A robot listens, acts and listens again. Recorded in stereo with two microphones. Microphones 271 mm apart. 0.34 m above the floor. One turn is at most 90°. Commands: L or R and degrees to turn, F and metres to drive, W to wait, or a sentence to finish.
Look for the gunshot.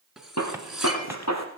L75
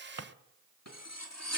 W
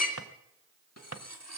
I heard a gunshot, but can't make it out now. It was about straight ahead or 30° left.